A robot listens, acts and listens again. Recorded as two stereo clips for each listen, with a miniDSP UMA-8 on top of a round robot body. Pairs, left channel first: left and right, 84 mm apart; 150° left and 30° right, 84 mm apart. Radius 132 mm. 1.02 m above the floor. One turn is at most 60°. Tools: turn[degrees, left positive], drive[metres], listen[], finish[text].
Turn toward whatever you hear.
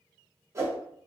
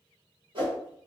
Thought: The whoosh: 35° right.
Action: turn[-35]
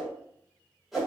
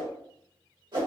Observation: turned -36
Action: finish[Facing the whoosh, 1 to 2 m away.]